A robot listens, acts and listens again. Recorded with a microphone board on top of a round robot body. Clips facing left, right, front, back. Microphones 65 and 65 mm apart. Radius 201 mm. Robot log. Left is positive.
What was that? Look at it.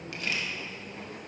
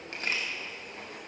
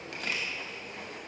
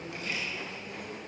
note: The camera shutter: 35° right.
cmd yaw -35
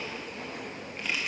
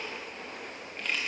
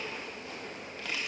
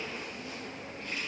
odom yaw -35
end: Found it: a camera shutter, straight ahead, 1 to 2 m away.